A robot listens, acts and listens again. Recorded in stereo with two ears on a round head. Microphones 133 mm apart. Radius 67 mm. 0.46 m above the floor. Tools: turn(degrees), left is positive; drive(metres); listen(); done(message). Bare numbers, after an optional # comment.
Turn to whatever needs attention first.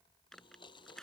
listen()
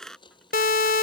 # The siren: about 65° left or 115° left.
turn(65)
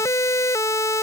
# So it is at 25° left.
turn(25)
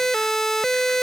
done("Facing the siren.")